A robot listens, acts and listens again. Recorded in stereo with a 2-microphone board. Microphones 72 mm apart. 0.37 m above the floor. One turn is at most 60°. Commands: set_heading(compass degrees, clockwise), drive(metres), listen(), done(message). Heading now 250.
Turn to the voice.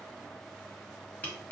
listen()
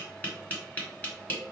listen()
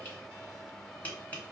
done("I can't make out anyone speaking, only tapping.")